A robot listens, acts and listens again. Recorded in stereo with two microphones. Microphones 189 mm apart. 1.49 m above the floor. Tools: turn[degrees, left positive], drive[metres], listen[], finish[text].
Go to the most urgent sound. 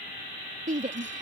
Thought: The shout: about 40° right or 140° right.
Action: turn[-40]
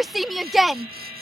Action: drive[1.0]
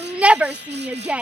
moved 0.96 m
Action: drive[1.0]
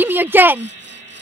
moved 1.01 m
Thought: The shout is now 10° right.
Action: turn[-10]
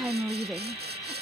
Action: drive[1.0]
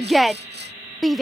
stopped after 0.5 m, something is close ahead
Action: finish[I am next to the shout.]